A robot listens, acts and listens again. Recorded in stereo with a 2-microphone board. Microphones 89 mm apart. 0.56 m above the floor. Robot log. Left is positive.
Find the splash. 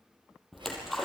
cmd yaw +30
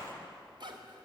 note: So it is at 30° right.
cmd yaw -30
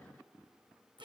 end: I heard a splash from this way, but can't make it out now.